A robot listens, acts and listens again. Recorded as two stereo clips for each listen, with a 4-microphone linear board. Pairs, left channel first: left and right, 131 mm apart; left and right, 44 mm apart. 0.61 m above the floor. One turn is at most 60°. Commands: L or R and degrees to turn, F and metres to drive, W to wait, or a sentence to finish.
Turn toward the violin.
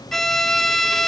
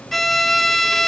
L30
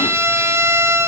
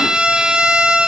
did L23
R20
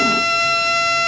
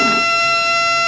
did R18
Found it: a violin, straight ahead, 1 to 2 m away.